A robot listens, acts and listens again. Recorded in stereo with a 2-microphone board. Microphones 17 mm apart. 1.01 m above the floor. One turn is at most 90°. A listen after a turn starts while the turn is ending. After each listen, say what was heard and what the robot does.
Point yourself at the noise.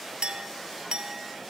Turn 90° right.
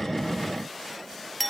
So it is at 15° left. Turn 15° left.
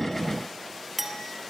Facing the clink, 1 to 2 m away.